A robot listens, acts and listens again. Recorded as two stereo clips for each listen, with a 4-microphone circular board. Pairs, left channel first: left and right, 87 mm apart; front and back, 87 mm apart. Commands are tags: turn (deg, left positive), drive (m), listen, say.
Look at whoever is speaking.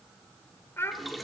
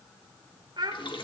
<turn deg="150"/>
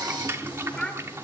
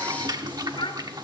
<say>Found it: a child speaking, straight ahead, 1 to 2 m away.</say>